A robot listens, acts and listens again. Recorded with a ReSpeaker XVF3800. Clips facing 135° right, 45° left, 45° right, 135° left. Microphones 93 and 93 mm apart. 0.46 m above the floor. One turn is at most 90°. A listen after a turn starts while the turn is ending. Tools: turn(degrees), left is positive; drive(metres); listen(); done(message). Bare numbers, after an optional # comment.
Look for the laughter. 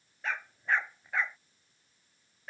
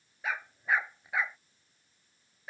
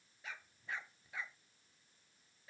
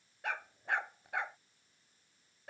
listen()
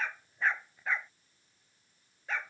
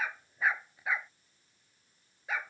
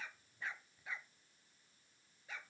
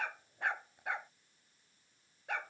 listen()
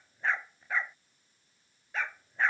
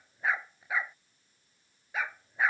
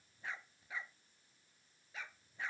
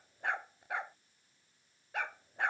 done("I can't make out laughter, only a dog barking.")